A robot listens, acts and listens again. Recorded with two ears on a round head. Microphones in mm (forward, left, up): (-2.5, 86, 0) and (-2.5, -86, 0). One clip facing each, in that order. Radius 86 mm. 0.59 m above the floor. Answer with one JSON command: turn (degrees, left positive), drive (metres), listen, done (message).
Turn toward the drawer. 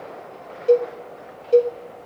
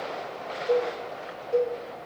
{"listen": true}
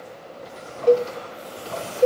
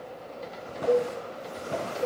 {"turn": -25}
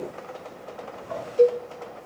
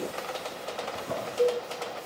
{"turn": -130}
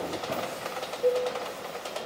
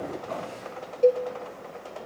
{"turn": 15}
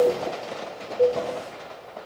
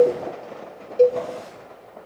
{"listen": true}
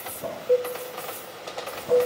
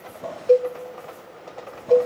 {"done": "Facing the drawer."}